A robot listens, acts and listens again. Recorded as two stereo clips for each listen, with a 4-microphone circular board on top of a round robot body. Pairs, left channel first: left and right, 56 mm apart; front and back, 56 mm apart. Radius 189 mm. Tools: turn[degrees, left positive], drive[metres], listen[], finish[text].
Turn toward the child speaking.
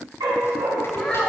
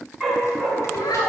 Thought: The child speaking: 10° left.
Action: turn[10]
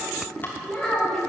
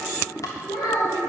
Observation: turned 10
Thought: The child speaking is now 10° left.
Action: turn[10]
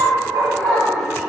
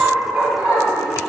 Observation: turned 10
Action: listen[]
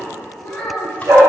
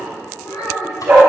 Thought: The child speaking is now 15° left.
Action: turn[15]
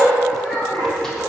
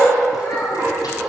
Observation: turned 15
Action: finish[Found it: a child speaking, straight ahead, over 4 m away.]